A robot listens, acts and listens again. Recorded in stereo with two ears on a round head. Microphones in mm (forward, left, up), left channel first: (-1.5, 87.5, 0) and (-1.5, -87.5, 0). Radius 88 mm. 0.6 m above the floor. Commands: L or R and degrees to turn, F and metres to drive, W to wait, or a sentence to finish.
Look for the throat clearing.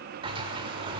W
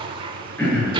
L30
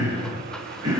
R20
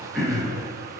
Facing the throat clearing, over 4 m away.